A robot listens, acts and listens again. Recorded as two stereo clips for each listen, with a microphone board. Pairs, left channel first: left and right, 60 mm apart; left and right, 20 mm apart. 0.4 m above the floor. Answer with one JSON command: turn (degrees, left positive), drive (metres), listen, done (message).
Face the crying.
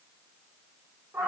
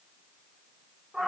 {"listen": true}
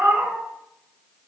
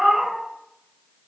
{"listen": true}
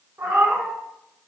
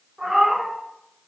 {"done": "I can't make out crying, only a cat meowing."}